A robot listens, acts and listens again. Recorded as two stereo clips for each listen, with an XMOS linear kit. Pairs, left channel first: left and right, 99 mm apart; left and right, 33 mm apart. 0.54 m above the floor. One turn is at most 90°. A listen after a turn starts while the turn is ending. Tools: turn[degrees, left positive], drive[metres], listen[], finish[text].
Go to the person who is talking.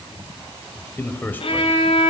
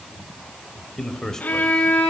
Thought: The man speaking: about 20° left or 160° left.
Action: turn[20]
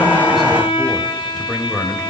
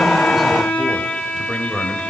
Action: drive[1.0]
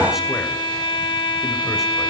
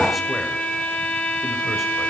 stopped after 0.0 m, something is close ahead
Action: listen[]
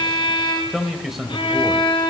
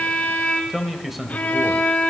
Action: finish[Something is in my way. I am facing the man speaking but have not reached it.]